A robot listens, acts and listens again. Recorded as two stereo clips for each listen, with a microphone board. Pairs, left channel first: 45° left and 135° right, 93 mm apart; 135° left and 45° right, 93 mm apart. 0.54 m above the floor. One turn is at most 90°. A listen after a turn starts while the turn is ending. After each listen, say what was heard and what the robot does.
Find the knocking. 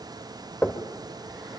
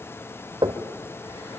The knocking: 25° right. Turn 25° right.
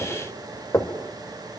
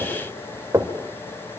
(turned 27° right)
Found it: knocking, straight ahead, 1 to 2 m away.